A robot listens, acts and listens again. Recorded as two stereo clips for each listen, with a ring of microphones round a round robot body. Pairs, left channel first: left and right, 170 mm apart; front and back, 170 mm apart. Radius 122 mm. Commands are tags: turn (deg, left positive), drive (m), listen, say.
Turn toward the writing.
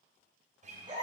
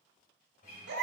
<listen/>
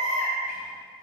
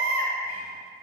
<listen/>
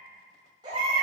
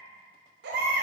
<say>I can't make out writing, only a baby crying and a guitar.</say>